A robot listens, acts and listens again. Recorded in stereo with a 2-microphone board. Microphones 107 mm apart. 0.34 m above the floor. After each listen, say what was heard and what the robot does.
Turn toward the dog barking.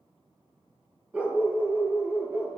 Turn 30° right.
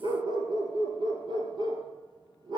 So it is at 135° right. Turn 135° right.
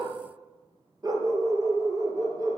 The dog barking is now 35° right. Turn 35° right.
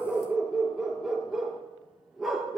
Facing the dog barking.